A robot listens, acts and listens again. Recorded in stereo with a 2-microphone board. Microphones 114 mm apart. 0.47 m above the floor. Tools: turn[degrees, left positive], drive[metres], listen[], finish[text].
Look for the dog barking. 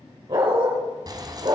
Thought: The dog barking: about 50° right or 130° right.
Action: turn[-50]
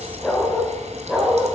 Action: finish[Facing the dog barking, over 4 m away.]